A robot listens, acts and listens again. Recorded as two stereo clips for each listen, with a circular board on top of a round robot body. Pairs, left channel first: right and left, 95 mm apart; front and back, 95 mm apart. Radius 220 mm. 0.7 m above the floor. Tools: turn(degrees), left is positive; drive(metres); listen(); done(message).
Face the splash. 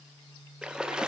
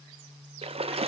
turn(degrees=170)
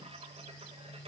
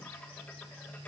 done("I heard a splash from this way, but can't make it out now.")